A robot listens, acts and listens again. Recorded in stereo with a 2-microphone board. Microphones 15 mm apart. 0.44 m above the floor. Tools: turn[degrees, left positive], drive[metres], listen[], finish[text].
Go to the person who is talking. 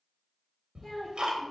Thought: The child speaking: about 50° left or 130° left.
Action: turn[50]
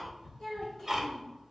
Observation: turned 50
Thought: So it is at 80° left.
Action: turn[80]
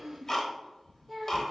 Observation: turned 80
Thought: The child speaking is now 10° left.
Action: turn[10]
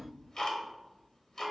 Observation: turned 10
Action: listen[]
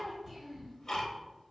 Action: listen[]
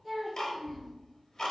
Action: drive[1.0]
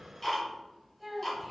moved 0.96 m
Action: drive[1.0]
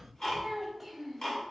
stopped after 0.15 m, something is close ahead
Action: finish[I am next to the child speaking.]